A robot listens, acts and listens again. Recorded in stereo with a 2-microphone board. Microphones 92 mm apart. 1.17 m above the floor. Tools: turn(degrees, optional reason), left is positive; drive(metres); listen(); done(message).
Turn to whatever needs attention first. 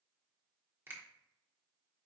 listen()
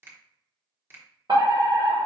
turn(degrees=-55, reason="The fire alarm: about 55° right or 125° right.")
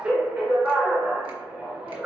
turn(degrees=-20, reason="So it is at 20° right.")
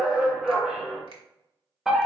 done("Facing the fire alarm.")